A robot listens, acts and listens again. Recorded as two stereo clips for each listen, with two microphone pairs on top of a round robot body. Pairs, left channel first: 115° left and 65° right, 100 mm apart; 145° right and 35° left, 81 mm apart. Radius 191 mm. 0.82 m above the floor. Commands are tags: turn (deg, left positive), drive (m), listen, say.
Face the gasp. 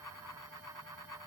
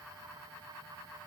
<listen/>
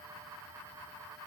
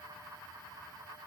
<listen/>
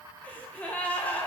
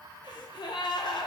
<turn deg="-170"/>
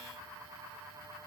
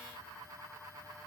<say>Facing where the gasp came from. I can't hear it now.</say>